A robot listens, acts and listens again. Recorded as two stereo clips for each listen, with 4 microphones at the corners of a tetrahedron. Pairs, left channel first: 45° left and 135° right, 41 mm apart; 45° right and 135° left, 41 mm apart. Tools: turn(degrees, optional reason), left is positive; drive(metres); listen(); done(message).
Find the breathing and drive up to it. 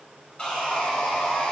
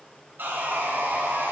listen()
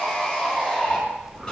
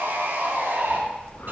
turn(degrees=-35, reason="The breathing: 35° right.")
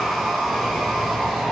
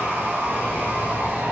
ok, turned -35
listen()
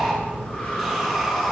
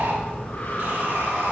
turn(degrees=-15, reason="The breathing is now 15° right.")
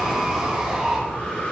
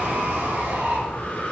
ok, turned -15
drive(metres=1.0)
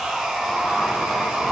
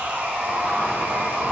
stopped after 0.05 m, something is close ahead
listen()
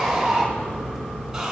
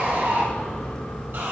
done("Blocked. The breathing is further on, straight ahead.")